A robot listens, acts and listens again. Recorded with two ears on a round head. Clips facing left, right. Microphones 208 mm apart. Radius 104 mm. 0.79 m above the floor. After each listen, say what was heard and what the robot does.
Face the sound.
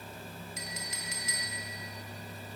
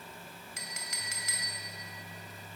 The clink: about 60° right or 120° right. Turn 60° right.
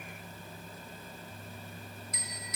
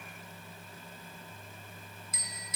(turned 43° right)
So it is at 80° right. Turn 80° right.
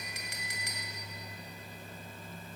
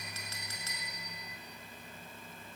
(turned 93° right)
The clink is now 15° left. Turn 15° left.
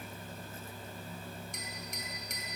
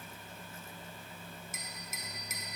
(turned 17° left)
Facing the clink.